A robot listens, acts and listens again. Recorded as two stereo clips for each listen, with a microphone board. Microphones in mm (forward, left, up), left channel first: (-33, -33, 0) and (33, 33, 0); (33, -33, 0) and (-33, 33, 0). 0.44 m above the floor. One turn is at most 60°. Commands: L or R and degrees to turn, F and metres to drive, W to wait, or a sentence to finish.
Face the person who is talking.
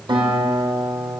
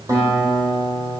W
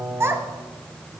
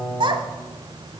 L60
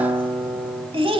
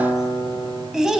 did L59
L50
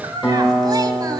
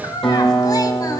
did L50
Facing the child speaking, 1 to 2 m away.